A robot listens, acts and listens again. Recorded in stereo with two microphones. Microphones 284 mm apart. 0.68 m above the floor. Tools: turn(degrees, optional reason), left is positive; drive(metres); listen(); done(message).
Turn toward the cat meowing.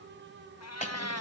turn(degrees=65, reason="The cat meowing: about 65° left or 115° left.")
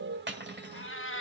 turn(degrees=45, reason="So it is at 45° left.")
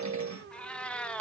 done("Facing the cat meowing.")